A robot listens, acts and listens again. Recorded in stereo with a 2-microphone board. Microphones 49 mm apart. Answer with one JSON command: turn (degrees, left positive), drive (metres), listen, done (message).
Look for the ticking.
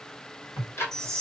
{"turn": 65}
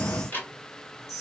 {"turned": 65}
{"turn": 45}
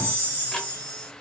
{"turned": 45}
{"listen": true}
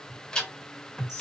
{"turn": 15}
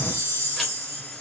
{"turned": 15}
{"listen": true}
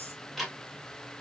{"done": "Facing the ticking."}